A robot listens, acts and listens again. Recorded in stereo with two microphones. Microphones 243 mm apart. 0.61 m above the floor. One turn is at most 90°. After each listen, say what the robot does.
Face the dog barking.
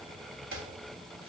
Keep listening.
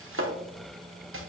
Keep listening.
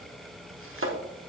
I can't make out a dog barking, only chopping.